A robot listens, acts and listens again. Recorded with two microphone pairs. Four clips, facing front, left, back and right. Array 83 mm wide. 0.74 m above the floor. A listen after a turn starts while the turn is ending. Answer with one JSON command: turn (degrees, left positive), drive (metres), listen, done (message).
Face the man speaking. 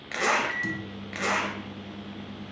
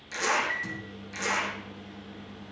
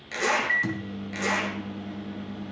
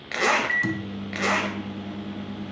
{"listen": true}
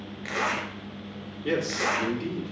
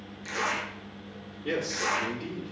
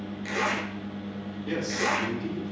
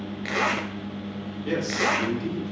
{"done": "Facing the man speaking, 2 to 4 m away."}